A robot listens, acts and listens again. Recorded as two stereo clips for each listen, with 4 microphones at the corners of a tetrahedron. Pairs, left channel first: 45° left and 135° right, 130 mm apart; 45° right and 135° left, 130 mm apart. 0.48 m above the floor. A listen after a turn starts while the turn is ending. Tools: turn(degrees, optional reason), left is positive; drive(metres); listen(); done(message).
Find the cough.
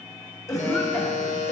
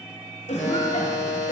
turn(degrees=-20, reason="The cough: 20° right.")
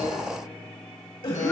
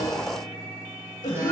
done("Found it: a cough, straight ahead.")